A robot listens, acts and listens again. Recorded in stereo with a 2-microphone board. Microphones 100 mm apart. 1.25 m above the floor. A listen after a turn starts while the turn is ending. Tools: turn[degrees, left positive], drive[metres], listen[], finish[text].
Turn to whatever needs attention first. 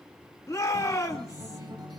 Thought: The shout: about 30° left or 150° left.
Action: turn[30]
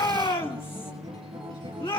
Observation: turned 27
Thought: So it is at 120° left.
Action: turn[120]
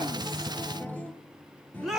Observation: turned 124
Action: finish[Found it: a shout, straight ahead.]